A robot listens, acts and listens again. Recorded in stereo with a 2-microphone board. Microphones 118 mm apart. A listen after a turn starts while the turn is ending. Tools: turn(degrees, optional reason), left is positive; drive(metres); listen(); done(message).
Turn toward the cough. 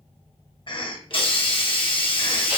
turn(degrees=45, reason="The cough: about 45° left or 135° left.")
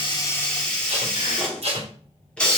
listen()
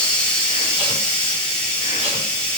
listen()
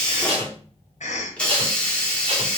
turn(degrees=95, reason="So it is at 95° left.")
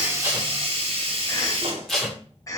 turn(degrees=30, reason="The cough is now 30° left.")
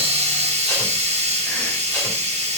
listen()
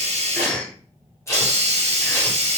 turn(degrees=10, reason="The cough is now 10° left.")
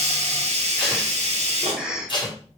done("Found it: a cough, straight ahead.")